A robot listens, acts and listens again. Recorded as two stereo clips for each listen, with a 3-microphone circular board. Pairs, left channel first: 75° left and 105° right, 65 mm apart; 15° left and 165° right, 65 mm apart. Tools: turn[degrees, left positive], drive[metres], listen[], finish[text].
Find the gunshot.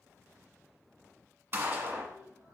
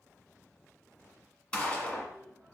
Thought: The gunshot: 50° right.
Action: turn[-50]
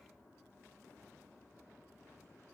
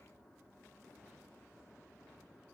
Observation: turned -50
Action: finish[Facing where the gunshot came from. I can't hear it now.]